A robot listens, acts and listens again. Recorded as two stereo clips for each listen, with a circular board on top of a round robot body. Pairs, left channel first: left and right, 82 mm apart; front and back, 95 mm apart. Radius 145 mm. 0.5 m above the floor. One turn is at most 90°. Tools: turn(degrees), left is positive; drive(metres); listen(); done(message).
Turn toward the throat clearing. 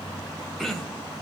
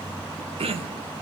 turn(degrees=90)
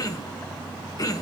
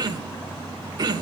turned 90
turn(degrees=90)
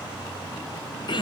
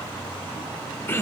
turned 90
turn(degrees=65)
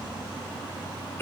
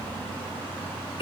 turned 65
turn(degrees=30)
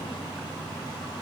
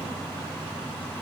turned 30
listen()
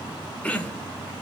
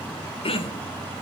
turn(degrees=15)
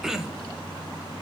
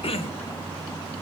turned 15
done("Found it: throat clearing, straight ahead, 1 to 2 m away.")